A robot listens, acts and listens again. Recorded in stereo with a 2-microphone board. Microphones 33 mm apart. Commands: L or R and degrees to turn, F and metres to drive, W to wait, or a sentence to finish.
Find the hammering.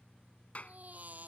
W
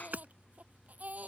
R55
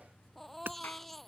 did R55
R75
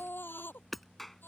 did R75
Facing the hammering.